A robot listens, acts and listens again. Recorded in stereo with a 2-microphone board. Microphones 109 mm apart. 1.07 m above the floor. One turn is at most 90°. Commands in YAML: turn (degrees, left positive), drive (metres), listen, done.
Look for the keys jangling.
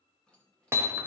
turn: 30
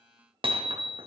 listen: true
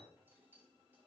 turn: -20
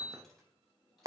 done: "Found it: keys jangling, straight ahead."